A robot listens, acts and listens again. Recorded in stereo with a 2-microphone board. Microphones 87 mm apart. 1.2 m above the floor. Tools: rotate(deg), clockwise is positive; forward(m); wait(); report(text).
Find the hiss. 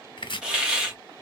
rotate(30)
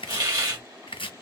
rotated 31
rotate(140)
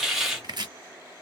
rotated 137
report("Found it: a hiss, straight ahead, 1 to 2 m away.")